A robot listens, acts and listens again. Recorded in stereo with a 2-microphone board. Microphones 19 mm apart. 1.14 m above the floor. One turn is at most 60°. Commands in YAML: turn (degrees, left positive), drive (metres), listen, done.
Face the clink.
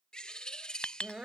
turn: 60
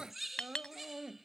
turn: 50
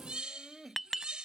done: "Facing the clink."